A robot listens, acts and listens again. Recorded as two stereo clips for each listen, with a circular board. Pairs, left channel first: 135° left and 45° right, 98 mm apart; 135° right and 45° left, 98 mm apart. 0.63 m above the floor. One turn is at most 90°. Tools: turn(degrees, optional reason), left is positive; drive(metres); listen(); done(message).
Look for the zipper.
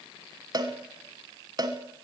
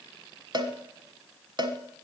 listen()
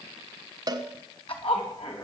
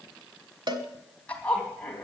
turn(degrees=90, reason="The zipper: 145° left.")
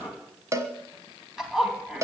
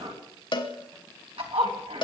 turn(degrees=40, reason="The zipper is now 40° left.")
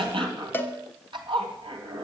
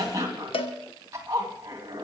turn(degrees=-10, reason="The zipper is now 10° right.")
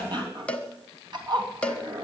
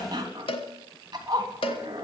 done("Facing the zipper, 2 to 4 m away.")